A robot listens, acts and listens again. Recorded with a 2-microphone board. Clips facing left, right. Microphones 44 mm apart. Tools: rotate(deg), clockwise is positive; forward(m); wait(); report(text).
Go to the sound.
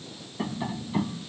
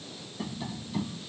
rotate(-25)
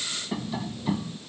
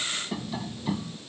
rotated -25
forward(1.0)
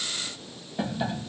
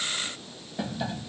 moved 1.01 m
rotate(-10)
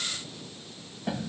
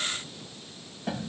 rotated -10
forward(1.0)
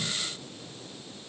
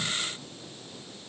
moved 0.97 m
wait()
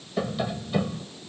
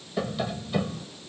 forward(1.0)
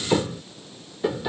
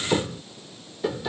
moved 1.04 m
forward(1.0)
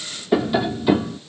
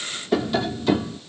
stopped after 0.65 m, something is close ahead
rotate(-15)
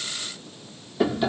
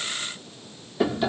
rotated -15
report("Arrived at the tapping, straight ahead.")